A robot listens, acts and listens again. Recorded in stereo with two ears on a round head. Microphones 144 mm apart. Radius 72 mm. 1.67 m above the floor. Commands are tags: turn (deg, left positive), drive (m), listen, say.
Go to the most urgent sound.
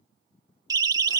<turn deg="-25"/>
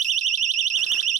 <turn deg="-130"/>
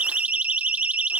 <turn deg="-10"/>
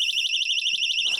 <drive m="1.0"/>
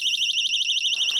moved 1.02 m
<drive m="1.0"/>
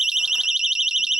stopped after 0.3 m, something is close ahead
<say>Arrived at the siren, straight ahead.</say>